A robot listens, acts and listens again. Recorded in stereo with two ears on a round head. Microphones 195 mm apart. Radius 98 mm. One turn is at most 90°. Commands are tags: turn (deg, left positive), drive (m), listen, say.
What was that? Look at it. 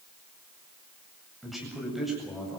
<turn deg="30"/>
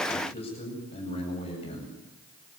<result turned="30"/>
<turn deg="90"/>
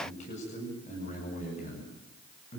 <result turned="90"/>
<turn deg="30"/>
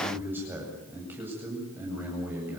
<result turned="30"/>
<turn deg="-10"/>
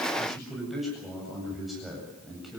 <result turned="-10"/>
<say>Facing the man speaking.</say>